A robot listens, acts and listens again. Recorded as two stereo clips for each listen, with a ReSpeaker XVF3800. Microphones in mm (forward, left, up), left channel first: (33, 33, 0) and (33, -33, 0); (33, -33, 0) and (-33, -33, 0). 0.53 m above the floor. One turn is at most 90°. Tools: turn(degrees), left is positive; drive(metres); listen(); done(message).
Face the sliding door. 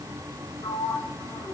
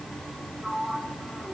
turn(degrees=90)
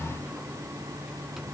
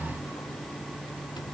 turn(degrees=10)
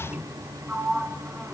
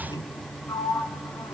turn(degrees=-20)
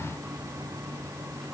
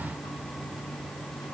listen()
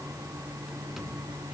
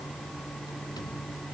listen()
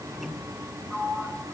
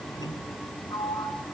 done("Facing the sliding door, 2 to 4 m away.")